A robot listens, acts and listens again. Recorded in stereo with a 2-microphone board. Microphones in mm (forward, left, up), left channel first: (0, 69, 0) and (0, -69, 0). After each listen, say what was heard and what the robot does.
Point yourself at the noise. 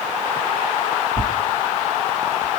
The tearing paper: about 55° right or 125° right. Turn 55° right.
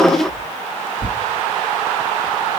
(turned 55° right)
Found it: tearing paper, straight ahead, 1 to 2 m away.